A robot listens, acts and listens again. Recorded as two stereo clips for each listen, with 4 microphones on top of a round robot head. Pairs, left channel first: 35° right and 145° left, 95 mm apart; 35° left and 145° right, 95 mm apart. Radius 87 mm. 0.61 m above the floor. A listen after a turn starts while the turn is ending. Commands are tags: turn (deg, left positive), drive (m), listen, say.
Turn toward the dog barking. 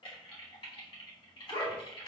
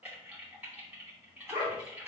<turn deg="-80"/>
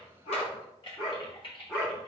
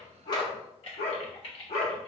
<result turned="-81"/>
<turn deg="30"/>
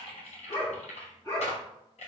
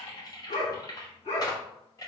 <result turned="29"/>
<turn deg="15"/>
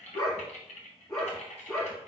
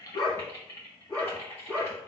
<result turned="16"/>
<say>Facing the dog barking.</say>